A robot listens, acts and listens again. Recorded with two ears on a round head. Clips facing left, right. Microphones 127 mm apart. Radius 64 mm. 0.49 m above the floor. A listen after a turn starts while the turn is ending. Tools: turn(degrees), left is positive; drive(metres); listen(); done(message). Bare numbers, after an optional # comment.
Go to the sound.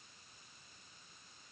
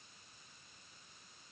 listen()
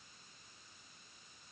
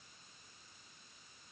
listen()
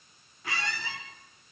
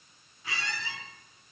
# The squeak: about 45° left or 135° left.
turn(45)
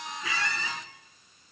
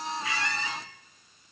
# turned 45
# So it is at 90° left.
turn(90)
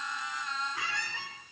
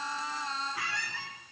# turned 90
drive(1.0)
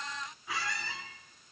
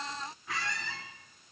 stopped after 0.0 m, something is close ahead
done("Something is in my way. I am facing the squeak but have not reached it.")